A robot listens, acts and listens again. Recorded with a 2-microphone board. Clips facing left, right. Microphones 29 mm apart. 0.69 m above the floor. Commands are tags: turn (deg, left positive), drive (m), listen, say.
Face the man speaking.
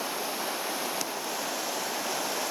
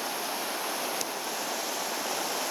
<listen/>
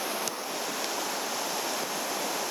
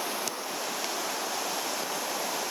<listen/>
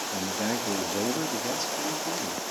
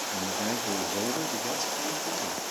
<turn deg="30"/>
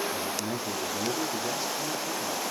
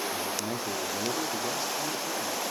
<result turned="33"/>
<turn deg="-15"/>
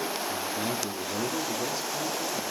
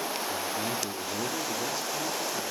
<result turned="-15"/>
<say>Found it: a man speaking, straight ahead, 2 to 4 m away.</say>